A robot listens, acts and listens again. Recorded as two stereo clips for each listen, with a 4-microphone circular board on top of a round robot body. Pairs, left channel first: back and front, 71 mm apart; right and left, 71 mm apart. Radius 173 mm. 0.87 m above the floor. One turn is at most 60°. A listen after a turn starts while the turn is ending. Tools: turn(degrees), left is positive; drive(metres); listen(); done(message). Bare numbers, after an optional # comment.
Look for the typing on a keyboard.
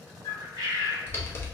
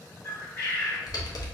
# The typing on a keyboard: 125° right.
turn(-60)
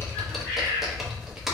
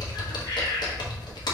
# The typing on a keyboard is now 85° right.
turn(-60)
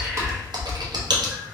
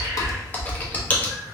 # The typing on a keyboard is now 20° right.
turn(-20)
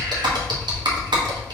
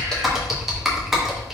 done("Facing the typing on a keyboard, 1 to 2 m away.")